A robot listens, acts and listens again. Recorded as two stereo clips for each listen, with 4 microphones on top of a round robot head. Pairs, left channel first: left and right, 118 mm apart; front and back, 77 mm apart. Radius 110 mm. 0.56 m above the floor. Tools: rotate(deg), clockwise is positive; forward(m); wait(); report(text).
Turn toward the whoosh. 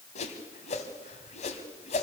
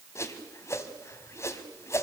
rotate(-55)
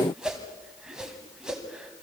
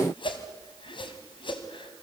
report("Facing the whoosh, 1 to 2 m away.")